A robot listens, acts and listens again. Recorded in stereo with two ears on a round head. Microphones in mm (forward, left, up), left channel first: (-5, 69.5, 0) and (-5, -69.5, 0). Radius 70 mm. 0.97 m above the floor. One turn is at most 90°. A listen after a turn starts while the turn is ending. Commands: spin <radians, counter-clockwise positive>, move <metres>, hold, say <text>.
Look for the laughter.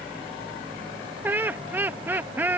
spin -0.52
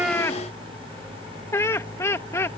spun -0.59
spin 0.35
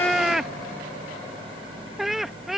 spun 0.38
say Found it: laughter, straight ahead.